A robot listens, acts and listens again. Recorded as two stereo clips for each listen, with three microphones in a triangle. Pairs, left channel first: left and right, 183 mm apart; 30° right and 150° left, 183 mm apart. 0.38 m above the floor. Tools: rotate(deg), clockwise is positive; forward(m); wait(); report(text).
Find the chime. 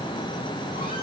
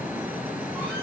wait()
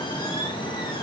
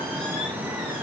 wait()
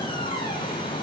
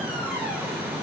report("I can't make out a chime to turn to.")